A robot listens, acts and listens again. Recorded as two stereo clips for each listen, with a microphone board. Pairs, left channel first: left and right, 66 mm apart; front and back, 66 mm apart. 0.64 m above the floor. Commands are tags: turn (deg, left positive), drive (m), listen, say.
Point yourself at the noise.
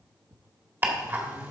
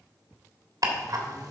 <turn deg="-150"/>
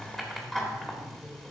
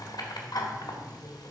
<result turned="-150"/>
<say>Found it: ticking, straight ahead, 1 to 2 m away.</say>